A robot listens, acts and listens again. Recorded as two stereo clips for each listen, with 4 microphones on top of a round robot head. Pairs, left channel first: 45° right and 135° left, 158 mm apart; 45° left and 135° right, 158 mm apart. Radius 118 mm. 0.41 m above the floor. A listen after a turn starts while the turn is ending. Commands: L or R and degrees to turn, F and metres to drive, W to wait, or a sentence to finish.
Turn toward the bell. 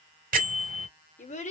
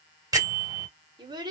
L160
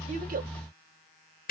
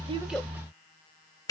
R25
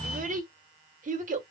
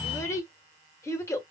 W
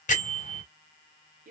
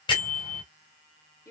R10
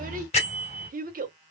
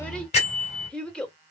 Facing the bell, 2 to 4 m away.